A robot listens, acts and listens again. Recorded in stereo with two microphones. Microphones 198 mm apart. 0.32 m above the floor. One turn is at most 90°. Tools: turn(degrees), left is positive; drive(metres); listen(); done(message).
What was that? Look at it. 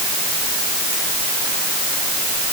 listen()
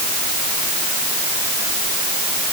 listen()
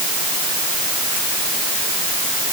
done("I can't make out anything.")